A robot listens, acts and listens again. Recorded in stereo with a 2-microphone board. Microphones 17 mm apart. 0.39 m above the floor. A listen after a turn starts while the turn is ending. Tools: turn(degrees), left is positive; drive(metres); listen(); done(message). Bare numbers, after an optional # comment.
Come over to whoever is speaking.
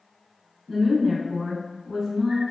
turn(-30)
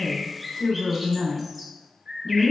# So it is at 25° left.
turn(25)
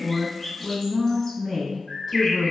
drive(1.0)
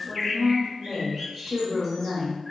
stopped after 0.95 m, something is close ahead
done("I am next to the woman speaking.")